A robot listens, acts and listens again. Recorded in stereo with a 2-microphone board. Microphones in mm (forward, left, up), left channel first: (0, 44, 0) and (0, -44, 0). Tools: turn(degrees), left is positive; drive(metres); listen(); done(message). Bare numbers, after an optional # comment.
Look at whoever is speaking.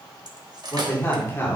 # The man speaking: about 30° left or 150° left.
turn(30)
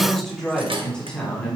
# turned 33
# So it is at 15° left.
turn(15)
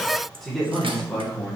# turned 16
# The man speaking is now 10° left.
turn(10)
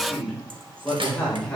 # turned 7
# The man speaking is now 10° left.
turn(10)
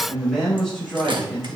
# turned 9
done("Facing the man speaking.")